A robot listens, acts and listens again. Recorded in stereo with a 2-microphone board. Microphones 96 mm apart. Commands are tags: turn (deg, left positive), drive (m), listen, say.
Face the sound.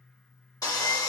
<turn deg="40"/>
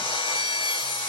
<turn deg="105"/>
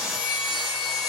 <say>Facing the sawing, 1 to 2 m away.</say>